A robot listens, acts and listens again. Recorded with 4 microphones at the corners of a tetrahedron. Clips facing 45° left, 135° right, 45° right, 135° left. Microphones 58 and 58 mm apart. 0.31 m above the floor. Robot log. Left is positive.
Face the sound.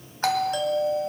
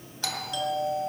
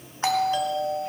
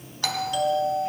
note: The doorbell: 10° left.
cmd yaw +10
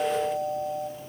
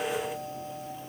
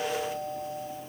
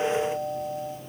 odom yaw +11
end: Facing the doorbell.